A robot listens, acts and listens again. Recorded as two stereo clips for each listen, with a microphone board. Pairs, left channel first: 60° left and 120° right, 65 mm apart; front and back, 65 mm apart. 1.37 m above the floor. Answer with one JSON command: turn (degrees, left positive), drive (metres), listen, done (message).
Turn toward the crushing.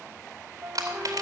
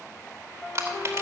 {"turn": -130}
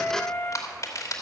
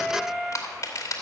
{"turn": 35}
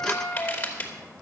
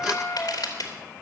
{"done": "Found it: crushing, straight ahead, 2 to 4 m away."}